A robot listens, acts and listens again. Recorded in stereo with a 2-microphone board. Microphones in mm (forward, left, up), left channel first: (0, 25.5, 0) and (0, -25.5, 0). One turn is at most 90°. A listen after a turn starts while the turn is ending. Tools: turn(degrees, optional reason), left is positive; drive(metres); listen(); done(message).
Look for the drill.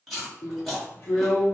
turn(degrees=35, reason="The drill: about 35° left or 145° left.")
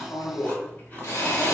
turn(degrees=90, reason="So it is at 105° left.")
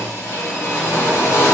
turn(degrees=65, reason="The drill is now 65° left.")
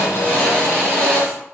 turn(degrees=25, reason="The drill is now 25° left.")
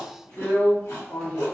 turn(degrees=20, reason="The drill is now 20° left.")
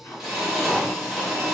done("Facing the drill.")